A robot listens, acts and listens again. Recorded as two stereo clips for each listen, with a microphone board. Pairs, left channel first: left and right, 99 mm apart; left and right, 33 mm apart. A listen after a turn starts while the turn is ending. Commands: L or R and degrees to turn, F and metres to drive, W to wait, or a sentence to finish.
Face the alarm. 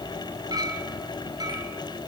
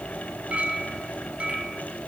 W
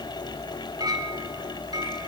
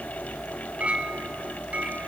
W
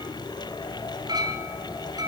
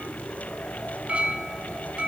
I can't make out an alarm, only a clink.